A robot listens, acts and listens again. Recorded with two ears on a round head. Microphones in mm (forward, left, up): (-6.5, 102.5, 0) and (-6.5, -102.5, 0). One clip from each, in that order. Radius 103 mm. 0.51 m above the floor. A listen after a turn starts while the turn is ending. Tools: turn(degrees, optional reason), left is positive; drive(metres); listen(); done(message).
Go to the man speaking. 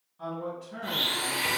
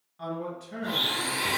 turn(degrees=-55, reason="The man speaking: about 55° right or 125° right.")
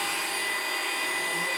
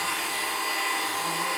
listen()
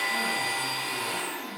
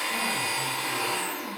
listen()
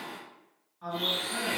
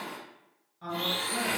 turn(degrees=-20, reason="So it is at 20° right.")
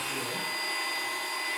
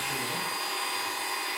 listen()
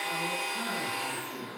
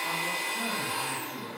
listen()
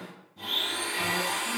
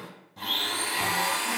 done("Facing where the man speaking came from. I can't hear it now. I did not reach it.")